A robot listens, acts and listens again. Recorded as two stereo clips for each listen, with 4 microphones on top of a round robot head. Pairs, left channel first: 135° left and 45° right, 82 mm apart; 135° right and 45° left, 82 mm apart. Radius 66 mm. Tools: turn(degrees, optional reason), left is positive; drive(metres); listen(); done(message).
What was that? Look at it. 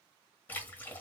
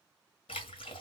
turn(degrees=-155, reason="The splash: 155° right.")
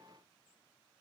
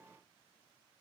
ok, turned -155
done("Facing where the splash came from. I can't hear it now.")